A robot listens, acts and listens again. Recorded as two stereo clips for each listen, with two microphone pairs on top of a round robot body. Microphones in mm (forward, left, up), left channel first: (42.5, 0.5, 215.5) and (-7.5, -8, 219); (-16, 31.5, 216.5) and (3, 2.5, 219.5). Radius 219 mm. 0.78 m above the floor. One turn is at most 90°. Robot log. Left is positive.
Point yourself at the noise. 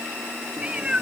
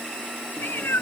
note: The cat meowing: 120° left.
cmd yaw +90
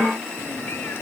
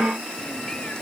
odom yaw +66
note: Nothing new. It was at 55° left.
cmd yaw +55
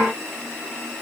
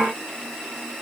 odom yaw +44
note: Nothing new. It was at 10° left.
cmd yaw +10
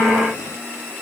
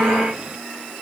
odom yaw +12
end: I heard a cat meowing from this way, but can't make it out now.